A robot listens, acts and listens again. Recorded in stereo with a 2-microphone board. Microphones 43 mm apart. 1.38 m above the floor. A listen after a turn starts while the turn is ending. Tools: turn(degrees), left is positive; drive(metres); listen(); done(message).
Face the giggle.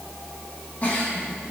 turn(degrees=35)
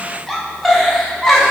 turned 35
done("Found it: a giggle, straight ahead, 1 to 2 m away.")